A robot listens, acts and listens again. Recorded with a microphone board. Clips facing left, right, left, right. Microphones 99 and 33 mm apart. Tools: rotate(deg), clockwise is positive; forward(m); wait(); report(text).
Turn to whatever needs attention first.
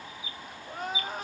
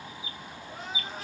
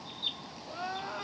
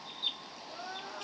rotate(-50)
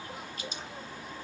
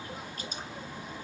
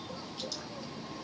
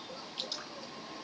wait()
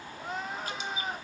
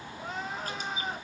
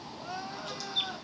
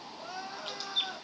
report("Facing the crying.")